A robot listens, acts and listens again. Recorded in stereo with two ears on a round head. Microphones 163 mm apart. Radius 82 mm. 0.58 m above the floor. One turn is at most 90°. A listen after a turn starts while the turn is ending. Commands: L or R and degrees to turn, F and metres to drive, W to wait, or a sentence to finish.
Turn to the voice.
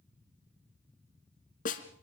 W
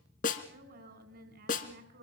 R60
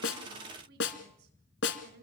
R60
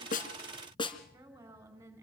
R15
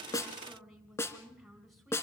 Facing the woman speaking, over 4 m away.